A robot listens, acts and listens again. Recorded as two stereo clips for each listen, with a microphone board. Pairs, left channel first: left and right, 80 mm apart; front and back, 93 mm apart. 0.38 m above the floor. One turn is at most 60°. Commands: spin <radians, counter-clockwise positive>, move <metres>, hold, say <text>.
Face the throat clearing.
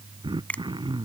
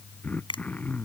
spin -1.05
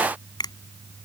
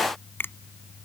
spin -0.17
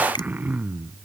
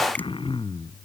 spin -0.35
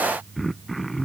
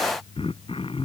say Found it: throat clearing, straight ahead.